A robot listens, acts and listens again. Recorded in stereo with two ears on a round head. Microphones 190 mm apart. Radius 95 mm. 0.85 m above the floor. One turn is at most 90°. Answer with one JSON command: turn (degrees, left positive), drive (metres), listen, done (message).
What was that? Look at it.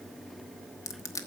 {"turn": 15}
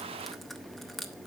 {"done": "Facing the crushing, 1 to 2 m away."}